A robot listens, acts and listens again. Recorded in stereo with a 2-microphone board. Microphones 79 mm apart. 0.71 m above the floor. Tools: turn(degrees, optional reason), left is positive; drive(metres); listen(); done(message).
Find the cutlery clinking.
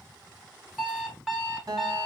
listen()
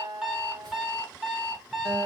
listen()
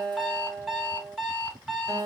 done("I can't make out cutlery clinking to turn to.")